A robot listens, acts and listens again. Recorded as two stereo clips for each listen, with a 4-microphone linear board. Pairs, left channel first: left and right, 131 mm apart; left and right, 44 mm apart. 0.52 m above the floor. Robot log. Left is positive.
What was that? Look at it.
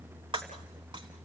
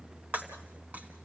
note: The breaking glass: about 40° right or 140° right.
cmd yaw -40
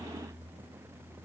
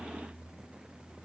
cmd idle
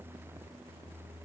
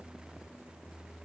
end: I heard breaking glass, but can't make it out now. It was about straight ahead or 100° right.